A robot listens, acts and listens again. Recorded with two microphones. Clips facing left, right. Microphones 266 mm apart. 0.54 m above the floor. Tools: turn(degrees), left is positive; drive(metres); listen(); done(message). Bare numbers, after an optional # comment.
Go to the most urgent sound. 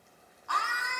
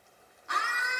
# The scream: about 20° right or 160° right.
turn(-20)
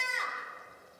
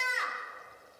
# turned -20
drive(1.0)
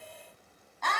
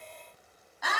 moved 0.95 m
# The scream is now 10° right.
turn(-10)
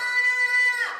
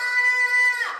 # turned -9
drive(1.0)
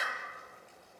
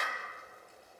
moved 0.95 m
drive(1.0)
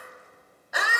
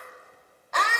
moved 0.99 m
# The scream is now 10° left.
turn(10)
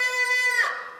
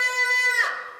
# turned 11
drive(1.0)
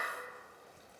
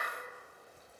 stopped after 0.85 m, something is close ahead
listen()
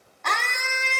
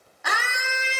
# The scream is now 10° right.
turn(-10)
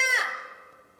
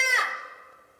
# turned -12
done("Arrived at the scream, straight ahead.")